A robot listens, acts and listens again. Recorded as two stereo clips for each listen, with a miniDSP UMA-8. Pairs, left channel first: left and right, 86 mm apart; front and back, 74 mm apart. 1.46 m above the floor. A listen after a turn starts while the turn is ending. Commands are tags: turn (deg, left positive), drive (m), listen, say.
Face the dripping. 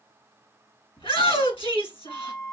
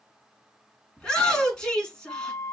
<listen/>
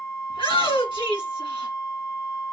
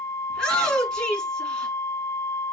<listen/>
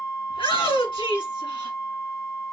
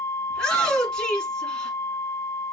<say>I can't make out dripping, only a shout and a flute.</say>